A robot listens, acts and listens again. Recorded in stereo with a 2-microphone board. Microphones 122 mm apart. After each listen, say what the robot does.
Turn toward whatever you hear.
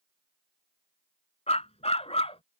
Turn 55° left.
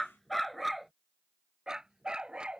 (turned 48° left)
Turn 10° right.
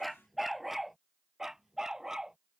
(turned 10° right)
Facing the dog barking.